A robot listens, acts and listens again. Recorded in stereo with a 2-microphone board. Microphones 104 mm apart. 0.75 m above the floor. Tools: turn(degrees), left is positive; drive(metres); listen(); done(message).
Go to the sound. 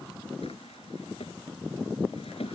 turn(degrees=70)
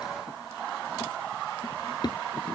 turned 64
turn(degrees=45)
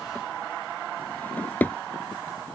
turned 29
turn(degrees=15)
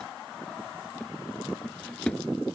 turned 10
drive(metres=1.0)
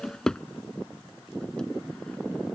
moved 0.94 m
drive(metres=1.0)
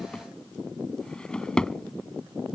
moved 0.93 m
turn(degrees=10)
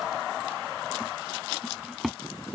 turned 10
drive(metres=1.0)
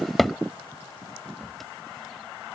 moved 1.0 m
drive(metres=1.0)
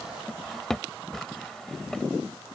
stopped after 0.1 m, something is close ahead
done("Arrived at the drawer, straight ahead.")